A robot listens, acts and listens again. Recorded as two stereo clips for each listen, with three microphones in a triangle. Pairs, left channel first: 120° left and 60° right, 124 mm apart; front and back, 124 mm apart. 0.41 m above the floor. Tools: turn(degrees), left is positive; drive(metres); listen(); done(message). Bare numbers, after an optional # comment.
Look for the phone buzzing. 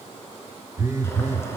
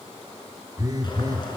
# The phone buzzing: 125° right.
turn(-125)
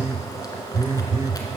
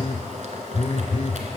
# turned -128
done("Found it: a phone buzzing, straight ahead.")